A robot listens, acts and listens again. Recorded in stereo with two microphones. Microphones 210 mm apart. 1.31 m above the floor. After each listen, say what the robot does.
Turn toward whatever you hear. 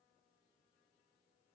Keep listening.
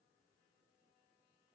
Keep listening.
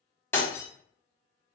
Turn 30° left.
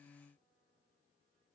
Keep listening.
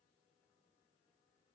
I heard breaking glass, but can't make it out now. It was about 20° right or 140° left.